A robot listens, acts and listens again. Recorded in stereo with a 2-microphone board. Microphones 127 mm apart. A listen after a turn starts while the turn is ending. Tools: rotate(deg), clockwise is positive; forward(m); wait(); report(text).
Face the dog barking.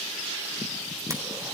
wait()
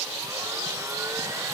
wait()
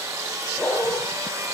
rotate(-20)
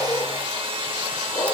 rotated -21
rotate(-140)
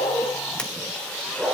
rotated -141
report("Facing the dog barking.")